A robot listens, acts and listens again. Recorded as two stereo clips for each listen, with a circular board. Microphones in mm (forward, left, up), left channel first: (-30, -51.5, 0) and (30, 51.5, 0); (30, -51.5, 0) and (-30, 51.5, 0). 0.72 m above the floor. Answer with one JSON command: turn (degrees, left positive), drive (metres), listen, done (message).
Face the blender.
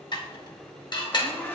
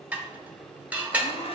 {"turn": -45}
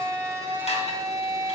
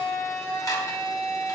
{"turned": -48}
{"done": "Found it: a blender, straight ahead."}